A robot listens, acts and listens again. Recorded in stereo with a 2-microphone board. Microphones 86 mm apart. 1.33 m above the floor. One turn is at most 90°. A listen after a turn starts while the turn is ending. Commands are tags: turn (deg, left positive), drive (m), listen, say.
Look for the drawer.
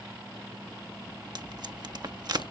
<listen/>
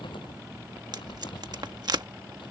<listen/>
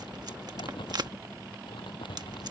<say>I can't make out a drawer to turn to.</say>